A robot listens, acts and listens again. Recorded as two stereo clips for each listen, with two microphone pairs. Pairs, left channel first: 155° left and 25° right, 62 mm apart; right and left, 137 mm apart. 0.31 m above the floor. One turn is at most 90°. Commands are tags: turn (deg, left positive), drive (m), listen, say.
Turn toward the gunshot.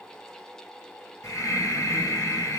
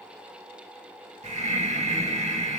<listen/>
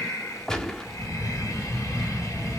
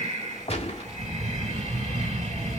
<turn deg="-90"/>
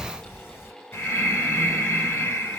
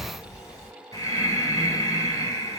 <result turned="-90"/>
<turn deg="-30"/>
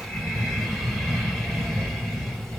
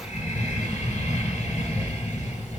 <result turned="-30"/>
<say>I heard a gunshot from this way, but can't make it out now.</say>